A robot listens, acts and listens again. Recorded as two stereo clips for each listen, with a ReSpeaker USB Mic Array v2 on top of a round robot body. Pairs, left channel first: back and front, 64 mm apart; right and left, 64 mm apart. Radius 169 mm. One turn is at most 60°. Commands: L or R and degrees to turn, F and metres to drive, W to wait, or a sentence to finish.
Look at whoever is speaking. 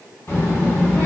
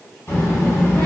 R60
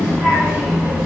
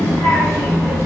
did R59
R60
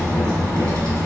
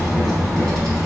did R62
R15
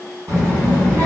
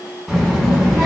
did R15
Found it: a child speaking, straight ahead, 1 to 2 m away.